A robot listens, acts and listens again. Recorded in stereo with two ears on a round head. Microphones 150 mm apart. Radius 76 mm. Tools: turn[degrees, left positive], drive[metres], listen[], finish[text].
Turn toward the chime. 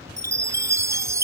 Thought: The chime: about 20° right or 160° right.
Action: turn[-20]
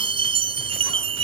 Thought: So it is at 145° right.
Action: turn[-145]
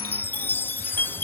Thought: The chime is now 10° left.
Action: turn[10]
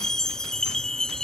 Action: finish[Found it: a chime, straight ahead.]